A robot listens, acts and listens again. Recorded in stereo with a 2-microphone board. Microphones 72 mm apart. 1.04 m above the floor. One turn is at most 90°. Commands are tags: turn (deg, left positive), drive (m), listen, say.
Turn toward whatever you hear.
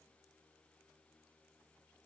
<listen/>
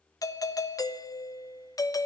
<turn deg="50"/>
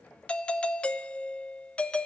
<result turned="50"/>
<turn deg="20"/>
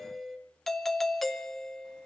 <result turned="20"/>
<say>Found it: a doorbell, straight ahead.</say>